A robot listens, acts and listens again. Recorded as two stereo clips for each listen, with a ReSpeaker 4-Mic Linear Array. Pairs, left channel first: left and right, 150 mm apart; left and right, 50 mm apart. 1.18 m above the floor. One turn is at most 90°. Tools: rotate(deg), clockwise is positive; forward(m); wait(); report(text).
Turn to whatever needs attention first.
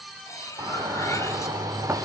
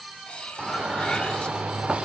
rotate(25)
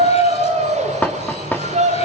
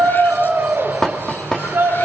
rotate(90)
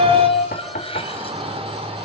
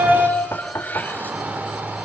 rotate(40)
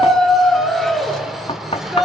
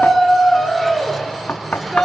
report("Facing the shout.")